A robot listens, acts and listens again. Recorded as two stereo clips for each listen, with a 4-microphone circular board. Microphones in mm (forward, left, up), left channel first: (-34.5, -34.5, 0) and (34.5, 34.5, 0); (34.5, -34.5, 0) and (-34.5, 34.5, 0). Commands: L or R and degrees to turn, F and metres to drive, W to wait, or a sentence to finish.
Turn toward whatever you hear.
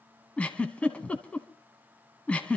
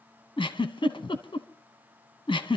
R60
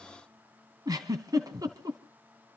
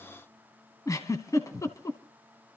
Facing the giggle.